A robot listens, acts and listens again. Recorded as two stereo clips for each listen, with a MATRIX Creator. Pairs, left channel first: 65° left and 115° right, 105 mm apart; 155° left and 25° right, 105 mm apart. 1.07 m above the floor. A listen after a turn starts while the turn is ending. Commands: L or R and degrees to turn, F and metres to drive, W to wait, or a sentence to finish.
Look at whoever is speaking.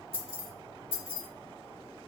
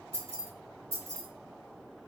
W
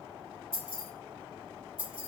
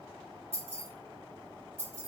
W
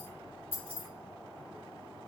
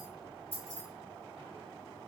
I can't make out anyone speaking, only keys jangling.